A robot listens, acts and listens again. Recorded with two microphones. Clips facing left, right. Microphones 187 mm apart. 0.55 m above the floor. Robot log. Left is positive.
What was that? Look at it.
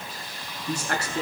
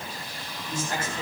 cmd yaw +90
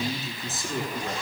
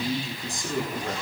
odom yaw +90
end: Facing the man speaking, over 4 m away.